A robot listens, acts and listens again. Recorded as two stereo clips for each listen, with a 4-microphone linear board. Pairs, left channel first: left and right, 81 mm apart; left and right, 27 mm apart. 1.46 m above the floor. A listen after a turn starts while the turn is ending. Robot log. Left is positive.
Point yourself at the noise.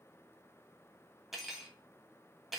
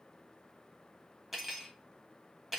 cmd yaw -30
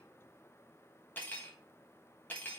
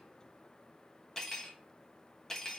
note: So it is at 25° left.
cmd yaw +25
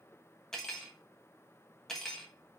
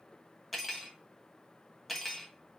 end: Found it: cutlery clinking, straight ahead, 1 to 2 m away.